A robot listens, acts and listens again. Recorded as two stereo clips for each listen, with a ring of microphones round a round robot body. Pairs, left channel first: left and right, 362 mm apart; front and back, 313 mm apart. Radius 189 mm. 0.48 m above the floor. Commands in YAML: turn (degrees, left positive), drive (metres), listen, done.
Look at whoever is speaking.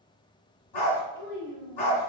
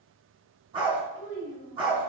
turn: 30
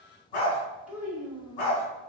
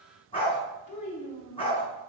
done: "Facing the child speaking, 1 to 2 m away."